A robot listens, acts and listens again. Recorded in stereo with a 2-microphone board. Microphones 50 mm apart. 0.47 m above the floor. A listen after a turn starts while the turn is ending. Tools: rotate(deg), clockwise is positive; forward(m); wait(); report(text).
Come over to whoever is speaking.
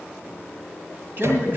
rotate(45)
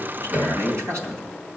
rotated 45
rotate(85)
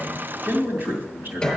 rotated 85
rotate(50)
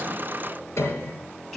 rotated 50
forward(1.0)
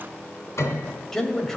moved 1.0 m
rotate(-10)
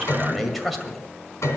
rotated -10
forward(1.0)
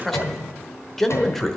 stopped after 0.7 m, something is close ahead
report("Arrived at the man speaking, straight ahead.")